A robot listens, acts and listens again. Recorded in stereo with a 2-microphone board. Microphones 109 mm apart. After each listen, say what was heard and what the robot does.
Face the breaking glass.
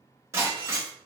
The breaking glass: about 25° right or 155° right. Turn 25° right.
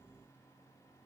Keep listening.
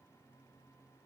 I heard breaking glass, but can't make it out now. It was about straight ahead or 130° right.